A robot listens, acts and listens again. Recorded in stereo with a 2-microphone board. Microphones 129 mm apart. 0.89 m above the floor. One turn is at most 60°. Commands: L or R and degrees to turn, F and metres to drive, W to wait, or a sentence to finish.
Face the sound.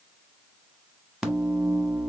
R30
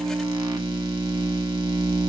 R60
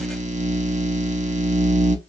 R60
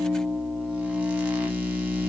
R10
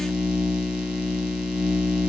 Found it: a microwave, straight ahead, under 1 m away.